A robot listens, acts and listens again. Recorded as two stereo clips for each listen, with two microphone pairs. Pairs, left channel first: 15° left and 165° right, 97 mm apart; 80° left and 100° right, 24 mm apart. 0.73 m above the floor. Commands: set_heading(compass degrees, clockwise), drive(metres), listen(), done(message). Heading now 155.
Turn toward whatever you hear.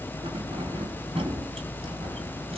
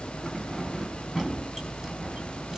set_heading(330)
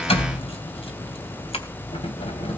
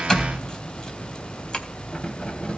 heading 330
set_heading(300)
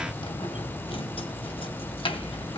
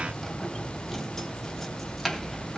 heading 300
done("Found it: keys jangling, straight ahead, 2 to 4 m away.")